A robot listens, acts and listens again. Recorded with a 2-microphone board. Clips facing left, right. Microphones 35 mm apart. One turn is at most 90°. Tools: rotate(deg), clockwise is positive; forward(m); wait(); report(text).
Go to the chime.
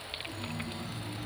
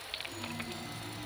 rotate(-45)
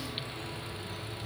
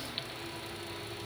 rotate(-90)
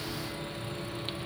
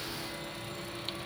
forward(1.0)
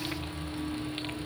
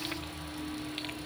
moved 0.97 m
forward(1.0)
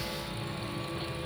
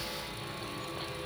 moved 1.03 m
forward(1.0)
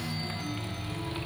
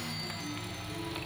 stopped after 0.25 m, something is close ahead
report("I am next to the chime.")